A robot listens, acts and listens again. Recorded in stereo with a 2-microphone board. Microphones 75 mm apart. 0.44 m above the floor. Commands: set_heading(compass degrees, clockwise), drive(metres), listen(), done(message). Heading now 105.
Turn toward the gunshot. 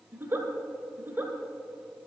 listen()
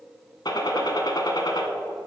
set_heading(40)
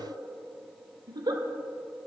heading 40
listen()
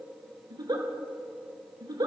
done("I heard a gunshot, but can't make it out now. It was about straight ahead or 50° left.")